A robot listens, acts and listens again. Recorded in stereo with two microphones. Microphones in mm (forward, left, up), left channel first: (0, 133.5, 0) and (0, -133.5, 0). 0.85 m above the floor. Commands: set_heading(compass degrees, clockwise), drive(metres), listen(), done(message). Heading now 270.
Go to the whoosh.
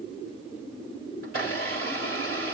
listen()
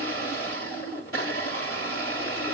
listen()
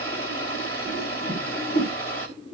set_heading(230)
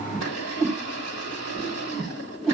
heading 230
drive(1.0)
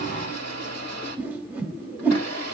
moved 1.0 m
drive(1.0)
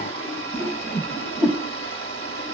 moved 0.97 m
drive(1.0)
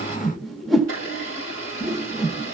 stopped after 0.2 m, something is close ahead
done("Arrived at the whoosh, straight ahead.")